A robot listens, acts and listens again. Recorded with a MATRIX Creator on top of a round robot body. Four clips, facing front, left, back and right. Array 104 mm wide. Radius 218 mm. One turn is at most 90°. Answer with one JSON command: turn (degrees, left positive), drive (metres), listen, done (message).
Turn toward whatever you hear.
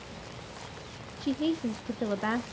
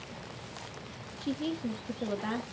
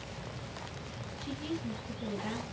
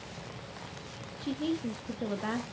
{"done": "Found it: a woman speaking, straight ahead, 1 to 2 m away."}